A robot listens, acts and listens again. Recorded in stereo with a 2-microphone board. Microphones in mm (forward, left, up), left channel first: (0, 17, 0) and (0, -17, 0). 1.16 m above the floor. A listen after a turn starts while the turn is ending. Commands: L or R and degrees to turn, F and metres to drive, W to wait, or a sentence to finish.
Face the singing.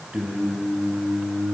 R55
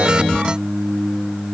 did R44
R75
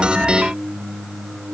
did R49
R25
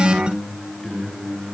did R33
L15
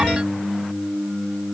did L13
Found it: singing, straight ahead.